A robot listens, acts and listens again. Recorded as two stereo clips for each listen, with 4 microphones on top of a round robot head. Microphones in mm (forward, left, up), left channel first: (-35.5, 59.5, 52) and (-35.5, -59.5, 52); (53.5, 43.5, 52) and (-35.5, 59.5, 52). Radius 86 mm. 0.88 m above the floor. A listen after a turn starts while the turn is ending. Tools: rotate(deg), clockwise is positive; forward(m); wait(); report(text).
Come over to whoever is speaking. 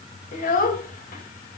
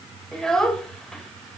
rotate(-75)
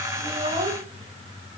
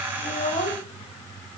rotate(40)
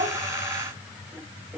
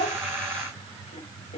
rotate(10)
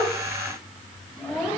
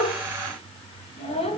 forward(1.0)
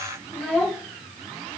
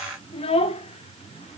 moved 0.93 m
forward(1.0)
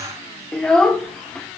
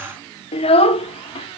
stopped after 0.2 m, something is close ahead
report("I am next to the child speaking.")